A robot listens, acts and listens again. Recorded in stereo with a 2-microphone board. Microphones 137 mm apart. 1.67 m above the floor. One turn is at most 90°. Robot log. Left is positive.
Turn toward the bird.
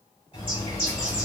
note: The bird: about 45° left or 135° left.
cmd yaw +45
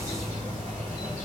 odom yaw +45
note: So it is at 90° left.
cmd yaw +90
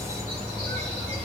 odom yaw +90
note: The bird is now 45° left.
cmd yaw +45
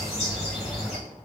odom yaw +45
end: Facing the bird, 1 to 2 m away.